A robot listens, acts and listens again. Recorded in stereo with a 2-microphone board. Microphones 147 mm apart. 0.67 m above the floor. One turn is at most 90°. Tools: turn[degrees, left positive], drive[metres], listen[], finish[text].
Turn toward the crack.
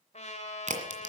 Thought: The crack: about 60° right or 120° right.
Action: turn[-60]
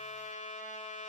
Action: listen[]
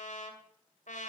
Action: finish[I heard a crack, but can't make it out now. It was about straight ahead or 60° right.]